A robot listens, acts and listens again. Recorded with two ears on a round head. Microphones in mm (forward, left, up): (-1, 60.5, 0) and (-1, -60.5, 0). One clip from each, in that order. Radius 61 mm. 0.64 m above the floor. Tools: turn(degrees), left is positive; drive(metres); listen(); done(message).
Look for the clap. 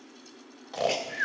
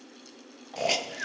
listen()
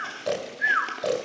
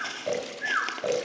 listen()
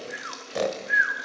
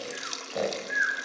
done("I can't make out a clap, only a hiss and snoring.")